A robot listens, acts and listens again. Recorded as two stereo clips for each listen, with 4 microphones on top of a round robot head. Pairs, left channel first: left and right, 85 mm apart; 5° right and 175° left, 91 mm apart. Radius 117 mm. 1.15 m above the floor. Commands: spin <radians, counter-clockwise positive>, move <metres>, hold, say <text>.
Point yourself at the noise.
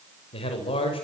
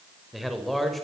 spin 1.48
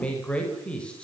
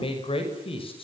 spin 0.17
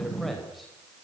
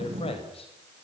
say Facing the man speaking, over 4 m away.